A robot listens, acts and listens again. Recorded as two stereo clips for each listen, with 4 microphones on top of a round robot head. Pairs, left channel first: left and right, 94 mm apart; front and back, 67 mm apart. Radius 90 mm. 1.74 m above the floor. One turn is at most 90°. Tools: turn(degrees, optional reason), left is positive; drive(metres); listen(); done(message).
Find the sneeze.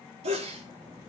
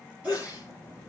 turn(degrees=-90, reason="The sneeze: 105° right.")
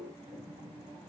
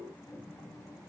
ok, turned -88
turn(degrees=-15, reason="Nothing new. It was at 15° right.")
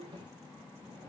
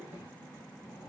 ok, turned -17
done("Facing where the sneeze came from. I can't hear it now.")